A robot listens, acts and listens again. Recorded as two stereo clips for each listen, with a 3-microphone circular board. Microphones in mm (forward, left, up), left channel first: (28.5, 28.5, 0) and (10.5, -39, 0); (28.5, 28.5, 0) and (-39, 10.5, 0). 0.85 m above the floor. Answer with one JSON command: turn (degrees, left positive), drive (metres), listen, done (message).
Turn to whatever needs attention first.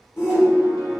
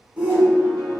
{"turn": 125}
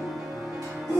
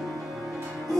{"turn": 25}
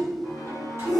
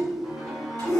{"turn": -10}
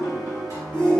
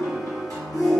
{"done": "Facing the shout, under 1 m away."}